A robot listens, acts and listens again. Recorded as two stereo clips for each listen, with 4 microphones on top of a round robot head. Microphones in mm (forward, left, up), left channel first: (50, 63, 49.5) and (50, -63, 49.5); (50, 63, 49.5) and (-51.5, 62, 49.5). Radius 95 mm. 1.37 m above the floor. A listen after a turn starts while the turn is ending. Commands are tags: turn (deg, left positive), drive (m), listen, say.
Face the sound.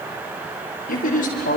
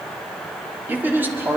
<turn deg="110"/>
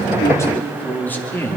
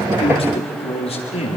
<turn deg="15"/>
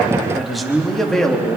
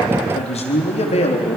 <say>Found it: a man speaking, straight ahead.</say>